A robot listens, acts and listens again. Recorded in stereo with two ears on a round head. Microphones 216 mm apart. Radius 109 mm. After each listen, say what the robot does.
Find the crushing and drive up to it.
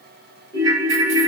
Keep listening.
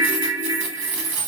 Keep listening.
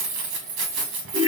I can't make out crushing, only a ringtone and keys jangling.